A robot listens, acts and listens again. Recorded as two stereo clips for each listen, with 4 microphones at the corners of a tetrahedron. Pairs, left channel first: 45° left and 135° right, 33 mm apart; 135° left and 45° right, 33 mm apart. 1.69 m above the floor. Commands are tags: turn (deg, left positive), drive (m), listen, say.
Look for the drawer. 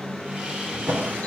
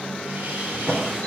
<turn deg="-135"/>
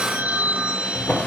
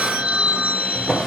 <turn deg="30"/>
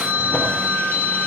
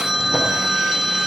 <listen/>
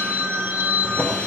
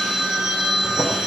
<listen/>
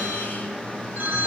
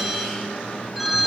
<say>I heard a drawer from this way, but can't make it out now.</say>